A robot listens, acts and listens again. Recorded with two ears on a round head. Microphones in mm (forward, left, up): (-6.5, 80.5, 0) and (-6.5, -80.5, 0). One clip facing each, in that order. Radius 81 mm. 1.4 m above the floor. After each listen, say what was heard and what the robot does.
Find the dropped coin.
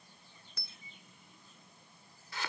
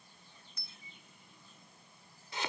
The dropped coin: about 60° left or 120° left. Turn 60° left.
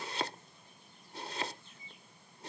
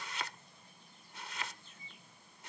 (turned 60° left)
Keep listening.
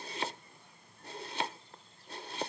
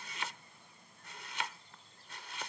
I heard a dropped coin, but can't make it out now. It was about straight ahead or 60° left.